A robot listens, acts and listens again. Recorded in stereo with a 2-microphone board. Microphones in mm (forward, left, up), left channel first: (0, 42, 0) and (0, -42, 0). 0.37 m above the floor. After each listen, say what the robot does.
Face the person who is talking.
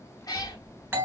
Turn 35° left.
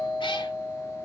Keep listening.
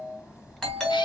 Facing the child speaking.